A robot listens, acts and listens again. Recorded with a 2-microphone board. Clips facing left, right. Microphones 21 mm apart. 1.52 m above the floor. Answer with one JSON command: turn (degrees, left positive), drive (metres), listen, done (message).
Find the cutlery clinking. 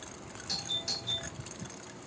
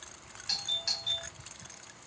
{"listen": true}
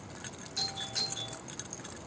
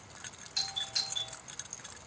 {"listen": true}
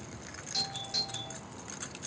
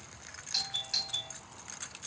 {"done": "I can't make out cutlery clinking, only a doorbell."}